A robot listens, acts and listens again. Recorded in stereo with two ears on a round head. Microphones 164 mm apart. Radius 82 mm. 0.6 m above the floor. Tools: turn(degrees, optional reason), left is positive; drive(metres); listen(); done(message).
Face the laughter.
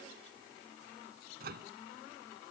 listen()
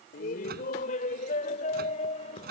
turn(degrees=35, reason="The laughter: about 35° left or 145° left.")
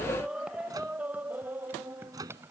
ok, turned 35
turn(degrees=-15, reason="So it is at 15° right.")
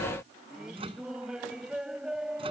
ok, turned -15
done("Facing the laughter.")